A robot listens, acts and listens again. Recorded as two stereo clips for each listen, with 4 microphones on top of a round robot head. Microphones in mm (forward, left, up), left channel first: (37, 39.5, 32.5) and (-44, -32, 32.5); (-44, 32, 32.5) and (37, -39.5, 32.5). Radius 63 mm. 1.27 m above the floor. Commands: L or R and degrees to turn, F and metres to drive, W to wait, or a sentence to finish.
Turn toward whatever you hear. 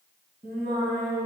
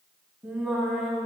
R120
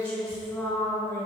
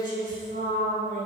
R35
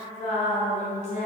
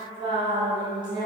L15
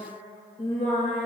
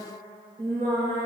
Found it: singing, straight ahead, over 4 m away.